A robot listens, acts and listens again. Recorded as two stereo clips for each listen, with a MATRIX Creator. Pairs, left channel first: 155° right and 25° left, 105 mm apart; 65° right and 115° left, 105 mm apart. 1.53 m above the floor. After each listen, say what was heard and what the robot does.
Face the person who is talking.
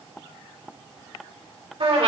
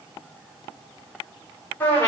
Keep listening.
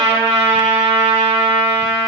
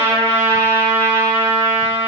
Keep listening.
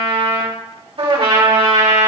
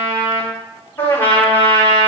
I can't make out anyone speaking, only a trumpet.